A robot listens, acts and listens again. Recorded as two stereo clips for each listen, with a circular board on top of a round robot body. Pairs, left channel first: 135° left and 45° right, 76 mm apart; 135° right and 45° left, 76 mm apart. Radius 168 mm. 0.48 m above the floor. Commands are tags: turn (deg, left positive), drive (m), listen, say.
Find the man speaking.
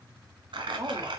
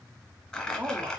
<turn deg="-10"/>
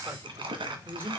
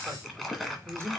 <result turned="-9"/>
<turn deg="10"/>
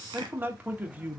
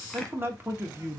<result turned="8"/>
<turn deg="20"/>
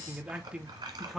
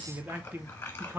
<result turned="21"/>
<turn deg="45"/>
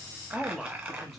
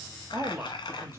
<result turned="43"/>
<turn deg="50"/>
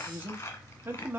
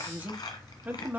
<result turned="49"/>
<say>Facing the man speaking, 1 to 2 m away.</say>